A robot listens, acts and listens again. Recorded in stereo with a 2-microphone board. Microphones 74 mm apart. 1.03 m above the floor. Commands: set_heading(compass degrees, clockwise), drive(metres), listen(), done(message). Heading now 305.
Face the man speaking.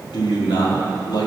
set_heading(235)
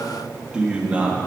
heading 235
set_heading(255)
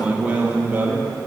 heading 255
set_heading(280)
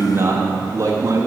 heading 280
set_heading(325)
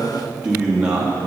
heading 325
set_heading(340)
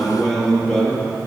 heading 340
done("Found it: a man speaking, straight ahead.")